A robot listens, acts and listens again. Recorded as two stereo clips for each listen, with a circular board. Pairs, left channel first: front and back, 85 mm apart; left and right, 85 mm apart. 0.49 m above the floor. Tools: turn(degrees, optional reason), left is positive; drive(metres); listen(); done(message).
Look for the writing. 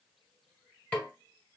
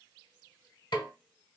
listen()
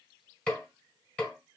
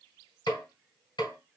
listen()
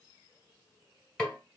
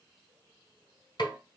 done("I can't make out writing to turn to.")